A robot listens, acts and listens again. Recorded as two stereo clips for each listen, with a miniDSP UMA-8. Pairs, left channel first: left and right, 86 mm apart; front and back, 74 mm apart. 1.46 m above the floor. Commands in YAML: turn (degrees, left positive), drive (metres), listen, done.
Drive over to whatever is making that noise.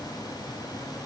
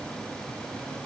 listen: true
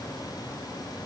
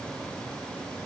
listen: true
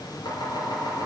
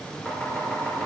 turn: 65
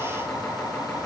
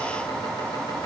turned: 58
drive: 1.0
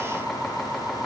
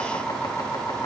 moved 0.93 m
drive: 1.0
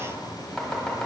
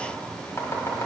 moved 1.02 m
turn: 15
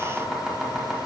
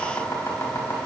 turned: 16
drive: 1.0
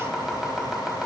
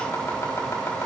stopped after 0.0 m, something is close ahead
done: "I am next to the chopping."